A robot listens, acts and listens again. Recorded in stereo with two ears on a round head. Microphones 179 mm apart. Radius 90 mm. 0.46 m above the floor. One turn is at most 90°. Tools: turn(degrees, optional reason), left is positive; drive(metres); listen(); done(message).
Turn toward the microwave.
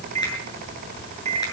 turn(degrees=-35, reason="The microwave: about 35° right or 145° right.")
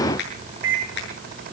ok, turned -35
turn(degrees=-90, reason="So it is at 110° right.")
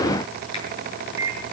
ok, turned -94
turn(degrees=-15, reason="The microwave is now 15° right.")
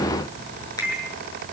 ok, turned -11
done("Facing the microwave, over 4 m away.")